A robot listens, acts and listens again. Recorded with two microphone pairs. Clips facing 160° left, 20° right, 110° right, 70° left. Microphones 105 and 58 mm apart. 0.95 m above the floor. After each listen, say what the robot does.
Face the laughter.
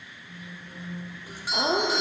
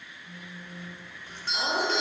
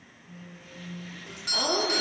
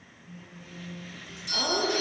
Turn 165° left.
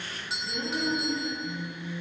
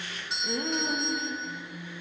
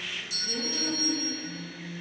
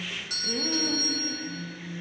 Found it: laughter, straight ahead.